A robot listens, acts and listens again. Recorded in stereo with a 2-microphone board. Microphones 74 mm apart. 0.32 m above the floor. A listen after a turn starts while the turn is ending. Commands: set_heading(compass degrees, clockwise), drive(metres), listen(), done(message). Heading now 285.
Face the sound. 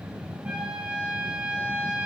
set_heading(305)
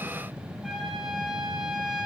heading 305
done("Facing the trumpet.")